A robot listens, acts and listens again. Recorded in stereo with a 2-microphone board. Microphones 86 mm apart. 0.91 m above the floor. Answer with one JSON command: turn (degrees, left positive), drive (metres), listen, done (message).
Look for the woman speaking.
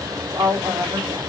{"turn": -45}
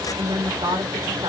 {"turn": -80}
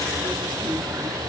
{"listen": true}
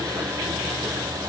{"listen": true}
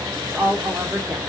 {"turn": -25}
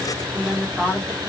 {"turn": -10}
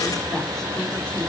{"listen": true}
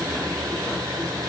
{"listen": true}
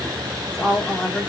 {"done": "Found it: a woman speaking, straight ahead, 2 to 4 m away."}